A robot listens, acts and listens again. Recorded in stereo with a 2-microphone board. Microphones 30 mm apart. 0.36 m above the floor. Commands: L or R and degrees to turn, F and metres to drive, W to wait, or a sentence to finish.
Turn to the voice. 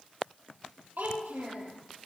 R90
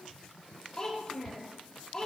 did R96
L15
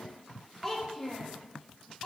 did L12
Found it: a child speaking, straight ahead, over 4 m away.